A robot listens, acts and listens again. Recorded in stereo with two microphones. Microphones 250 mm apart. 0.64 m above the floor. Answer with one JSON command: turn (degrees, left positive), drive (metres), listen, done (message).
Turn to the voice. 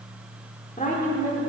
{"turn": 30}
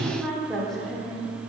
{"done": "Found it: a woman speaking, straight ahead."}